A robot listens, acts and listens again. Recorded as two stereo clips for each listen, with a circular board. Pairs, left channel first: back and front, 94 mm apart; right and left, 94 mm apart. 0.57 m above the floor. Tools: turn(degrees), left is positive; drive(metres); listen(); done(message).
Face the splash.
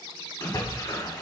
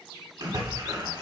turn(degrees=130)
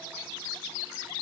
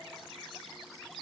done("Facing where the splash came from. I can't hear it now.")